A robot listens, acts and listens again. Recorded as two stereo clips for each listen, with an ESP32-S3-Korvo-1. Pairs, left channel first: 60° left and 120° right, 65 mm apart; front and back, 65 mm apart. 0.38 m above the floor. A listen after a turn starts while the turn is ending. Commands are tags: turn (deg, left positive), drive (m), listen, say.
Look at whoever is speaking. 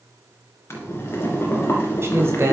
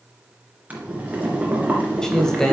<turn deg="-80"/>
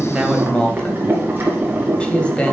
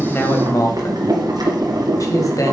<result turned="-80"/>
<turn deg="-10"/>
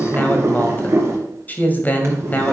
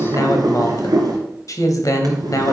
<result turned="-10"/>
<say>Facing the man speaking.</say>